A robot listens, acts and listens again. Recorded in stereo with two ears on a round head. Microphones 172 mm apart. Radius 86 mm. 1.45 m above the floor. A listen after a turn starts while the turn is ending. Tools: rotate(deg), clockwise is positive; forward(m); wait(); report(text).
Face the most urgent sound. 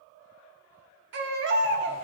rotate(60)
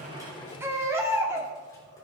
rotate(15)
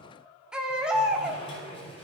report("Facing the baby crying, 1 to 2 m away.")